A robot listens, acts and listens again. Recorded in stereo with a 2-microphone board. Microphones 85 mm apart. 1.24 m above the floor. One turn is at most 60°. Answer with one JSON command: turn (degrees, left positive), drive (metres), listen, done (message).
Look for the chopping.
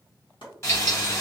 {"turn": 60}
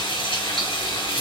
{"turn": 30}
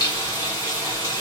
{"listen": true}
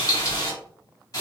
{"done": "I heard chopping from this way, but can't make it out now."}